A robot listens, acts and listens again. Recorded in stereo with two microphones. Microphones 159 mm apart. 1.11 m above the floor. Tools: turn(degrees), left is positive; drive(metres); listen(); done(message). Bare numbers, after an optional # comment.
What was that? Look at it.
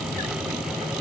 listen()
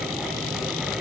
listen()
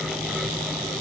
done("I can't make out anything.")